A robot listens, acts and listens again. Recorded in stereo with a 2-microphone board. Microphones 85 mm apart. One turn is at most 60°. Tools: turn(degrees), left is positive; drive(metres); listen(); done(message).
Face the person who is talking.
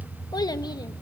turn(degrees=50)
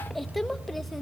listen()
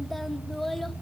done("Found it: a child speaking, straight ahead.")